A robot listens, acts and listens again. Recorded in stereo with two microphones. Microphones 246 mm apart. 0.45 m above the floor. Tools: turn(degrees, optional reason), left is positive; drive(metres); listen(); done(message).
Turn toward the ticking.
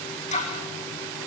turn(degrees=30, reason="The ticking: about 30° left or 150° left.")
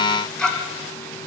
done("Facing the ticking.")